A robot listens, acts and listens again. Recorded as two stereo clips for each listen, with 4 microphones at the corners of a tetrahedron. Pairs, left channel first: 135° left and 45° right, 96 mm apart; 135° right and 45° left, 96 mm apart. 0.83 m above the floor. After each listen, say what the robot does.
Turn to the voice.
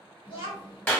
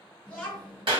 Turn 150° left.
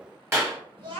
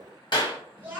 Turn 25° right.
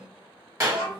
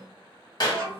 Turn 15° right.
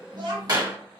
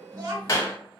Facing the child speaking.